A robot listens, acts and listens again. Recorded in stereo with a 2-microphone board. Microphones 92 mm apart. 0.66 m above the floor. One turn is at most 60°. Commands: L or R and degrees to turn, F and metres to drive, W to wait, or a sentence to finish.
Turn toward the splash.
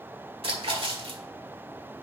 R60
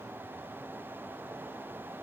W
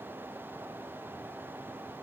I heard a splash, but can't make it out now. It was about 10° right or 50° right.